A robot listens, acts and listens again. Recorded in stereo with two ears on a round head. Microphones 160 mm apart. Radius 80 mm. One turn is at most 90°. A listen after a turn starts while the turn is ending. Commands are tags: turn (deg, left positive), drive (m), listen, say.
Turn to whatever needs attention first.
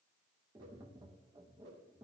<listen/>
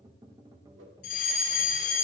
<turn deg="50"/>
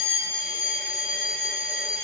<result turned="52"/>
<say>Found it: a fire alarm, straight ahead.</say>